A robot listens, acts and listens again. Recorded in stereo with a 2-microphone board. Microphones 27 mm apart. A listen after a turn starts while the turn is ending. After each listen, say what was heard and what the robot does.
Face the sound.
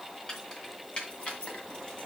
The keys jangling: about 35° left or 145° left. Turn 35° left.
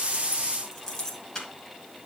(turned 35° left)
So it is at 20° left. Turn 20° left.
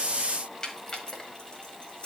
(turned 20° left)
The keys jangling is now 35° left. Turn 35° left.
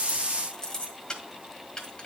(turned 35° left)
The keys jangling is now 20° left. Turn 20° left.
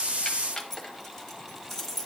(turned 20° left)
Found it: keys jangling, straight ahead.